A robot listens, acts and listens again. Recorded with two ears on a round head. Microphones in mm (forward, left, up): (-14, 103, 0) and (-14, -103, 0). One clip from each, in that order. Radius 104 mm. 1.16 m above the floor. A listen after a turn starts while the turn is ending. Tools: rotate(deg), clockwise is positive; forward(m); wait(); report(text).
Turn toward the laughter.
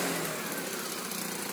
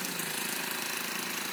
wait()
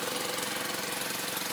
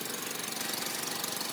wait()
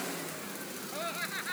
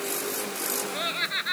rotate(65)
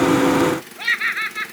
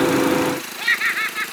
report("Found it: laughter, straight ahead.")